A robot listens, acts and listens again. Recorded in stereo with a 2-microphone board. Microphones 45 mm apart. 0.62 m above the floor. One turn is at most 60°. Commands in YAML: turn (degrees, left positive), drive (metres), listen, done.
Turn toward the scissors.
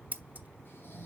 turn: -35
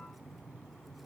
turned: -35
listen: true
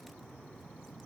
listen: true
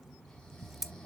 done: "Found it: scissors, straight ahead."